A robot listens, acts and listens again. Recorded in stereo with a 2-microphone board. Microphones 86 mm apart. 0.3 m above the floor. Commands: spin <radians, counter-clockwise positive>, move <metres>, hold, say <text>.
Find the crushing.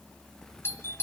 hold
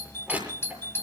spin -0.35
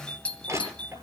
spin -2.44
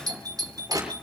spin -0.79
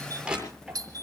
spin -0.17
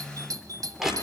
say Found it: crushing, straight ahead.